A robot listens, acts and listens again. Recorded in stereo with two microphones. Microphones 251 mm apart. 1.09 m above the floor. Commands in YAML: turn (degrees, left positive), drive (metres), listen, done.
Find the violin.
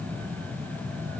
listen: true
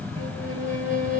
turn: -50
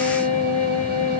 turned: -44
turn: -80
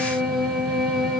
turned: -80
done: "Facing the violin."